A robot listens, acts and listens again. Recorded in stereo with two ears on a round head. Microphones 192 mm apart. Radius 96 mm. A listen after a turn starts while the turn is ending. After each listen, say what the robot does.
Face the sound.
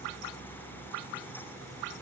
Keep listening.
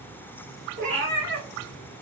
Turn 60° right.
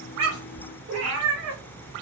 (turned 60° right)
Turn 75° right.
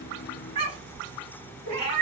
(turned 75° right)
Turn 35° right.
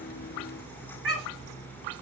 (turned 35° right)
Facing the cat meowing, 1 to 2 m away.